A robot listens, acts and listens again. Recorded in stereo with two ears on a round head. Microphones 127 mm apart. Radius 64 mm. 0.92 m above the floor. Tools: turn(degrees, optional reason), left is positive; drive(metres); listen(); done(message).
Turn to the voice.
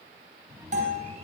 turn(degrees=-20, reason="The child speaking: about 20° right or 160° right.")
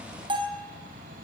turn(degrees=-145, reason="So it is at 145° right.")
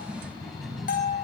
done("Facing the child speaking, over 4 m away.")